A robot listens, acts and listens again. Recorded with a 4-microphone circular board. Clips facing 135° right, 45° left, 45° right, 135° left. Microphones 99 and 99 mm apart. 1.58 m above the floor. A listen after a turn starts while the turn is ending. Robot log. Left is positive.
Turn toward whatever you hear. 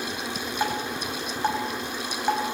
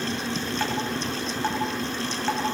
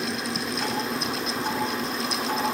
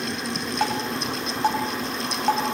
note: The dripping: 150° left.
cmd yaw +150
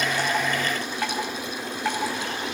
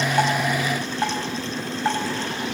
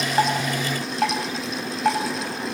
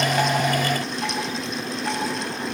note: The dripping is now 25° right.
cmd yaw -25
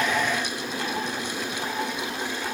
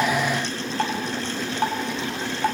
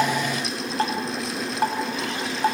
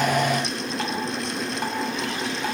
note: The dripping is now 10° left.
cmd yaw +10
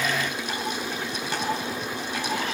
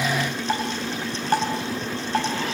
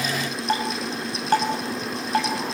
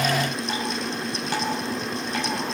end: Found it: dripping, straight ahead.